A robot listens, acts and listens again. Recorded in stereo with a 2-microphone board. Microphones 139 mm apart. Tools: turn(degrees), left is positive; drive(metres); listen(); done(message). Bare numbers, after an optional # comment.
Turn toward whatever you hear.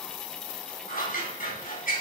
turn(90)
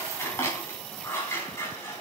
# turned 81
# So it is at 20° left.
turn(20)
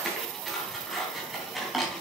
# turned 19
done("Found it: scissors, straight ahead, 2 to 4 m away.")